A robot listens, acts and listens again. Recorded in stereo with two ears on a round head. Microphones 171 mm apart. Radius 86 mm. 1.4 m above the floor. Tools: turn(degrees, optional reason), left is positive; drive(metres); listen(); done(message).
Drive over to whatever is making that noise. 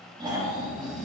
turn(degrees=-25, reason="The snoring: about 25° right or 155° right.")
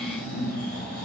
turn(degrees=-130, reason="So it is at 130° right.")
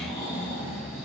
turn(degrees=-30, reason="The snoring is now 30° right.")
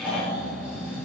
drive(metres=1.0)
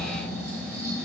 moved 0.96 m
turn(degrees=-15, reason="The snoring is now 15° right.")
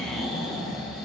drive(metres=1.0)
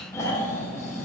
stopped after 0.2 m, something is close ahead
turn(degrees=15, reason="The snoring is now 15° left.")
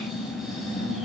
done("Arrived at the snoring, straight ahead.")